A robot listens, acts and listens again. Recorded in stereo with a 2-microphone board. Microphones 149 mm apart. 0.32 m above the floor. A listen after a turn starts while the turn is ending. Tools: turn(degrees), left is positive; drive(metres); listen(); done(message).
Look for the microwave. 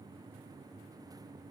listen()
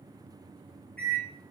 turn(degrees=30)
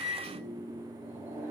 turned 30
turn(degrees=-20)
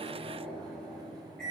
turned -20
done("Facing the microwave.")